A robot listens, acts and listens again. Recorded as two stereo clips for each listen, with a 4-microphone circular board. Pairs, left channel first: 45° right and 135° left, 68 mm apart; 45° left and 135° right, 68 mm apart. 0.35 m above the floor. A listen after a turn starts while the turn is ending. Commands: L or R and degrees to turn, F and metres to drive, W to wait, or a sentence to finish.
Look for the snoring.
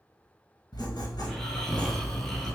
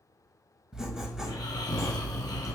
L40
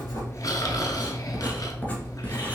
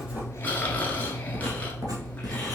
R20
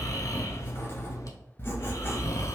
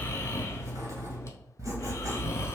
Facing the snoring.